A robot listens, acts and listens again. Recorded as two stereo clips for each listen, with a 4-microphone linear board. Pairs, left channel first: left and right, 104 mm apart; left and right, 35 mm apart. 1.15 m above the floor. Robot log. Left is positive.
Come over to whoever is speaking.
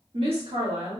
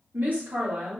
note: The woman speaking: about 65° right or 115° right.
cmd yaw -65
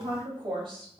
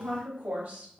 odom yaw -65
note: So it is at 50° right.
cmd yaw -50
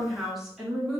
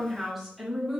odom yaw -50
cmd fwd 1.0
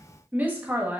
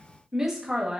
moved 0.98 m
note: The woman speaking is now 15° right.
cmd yaw -15
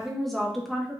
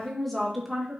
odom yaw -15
cmd fwd 1.0
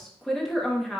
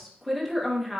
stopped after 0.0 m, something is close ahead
end: Arrived at the woman speaking, straight ahead.